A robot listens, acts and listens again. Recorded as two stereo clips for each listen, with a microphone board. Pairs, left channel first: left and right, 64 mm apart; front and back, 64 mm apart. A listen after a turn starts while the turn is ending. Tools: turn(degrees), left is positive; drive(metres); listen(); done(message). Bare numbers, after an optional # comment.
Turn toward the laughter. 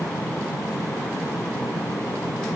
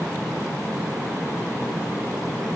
listen()
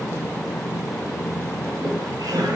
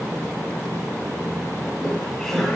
# The laughter: 85° right.
turn(-85)
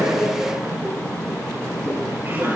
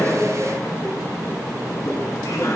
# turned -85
# The laughter is now 35° right.
turn(-35)
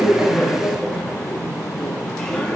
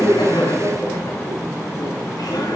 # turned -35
done("Found it: laughter, straight ahead, over 4 m away.")